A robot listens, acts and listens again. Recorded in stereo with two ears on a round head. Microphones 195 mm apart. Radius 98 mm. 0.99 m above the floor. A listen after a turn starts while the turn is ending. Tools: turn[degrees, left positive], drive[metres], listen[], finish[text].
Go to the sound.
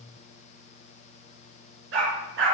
Thought: The dog barking: about 60° right or 120° right.
Action: turn[-60]
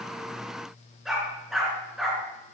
Action: drive[1.0]
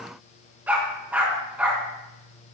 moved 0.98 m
Thought: The dog barking is now 10° right.
Action: turn[-10]
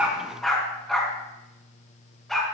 Action: drive[1.0]
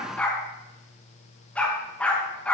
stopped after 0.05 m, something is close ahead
Action: finish[Blocked. The dog barking is further on, straight ahead.]